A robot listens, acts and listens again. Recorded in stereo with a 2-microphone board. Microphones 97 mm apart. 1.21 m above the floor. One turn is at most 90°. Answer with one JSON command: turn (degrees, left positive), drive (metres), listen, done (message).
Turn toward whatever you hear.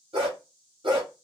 {"turn": -65}
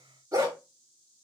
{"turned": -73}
{"turn": -35}
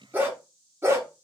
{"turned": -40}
{"turn": -30}
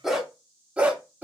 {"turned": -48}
{"turn": -20}
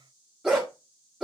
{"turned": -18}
{"done": "Facing the dog barking, 1 to 2 m away."}